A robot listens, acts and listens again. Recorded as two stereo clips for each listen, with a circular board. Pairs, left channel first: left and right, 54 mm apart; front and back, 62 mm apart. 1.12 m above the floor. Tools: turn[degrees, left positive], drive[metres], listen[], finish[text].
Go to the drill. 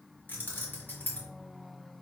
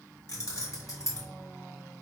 Action: listen[]
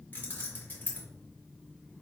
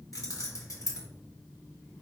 Action: listen[]
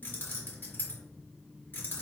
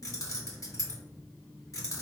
Action: finish[I can't make out a drill to turn to.]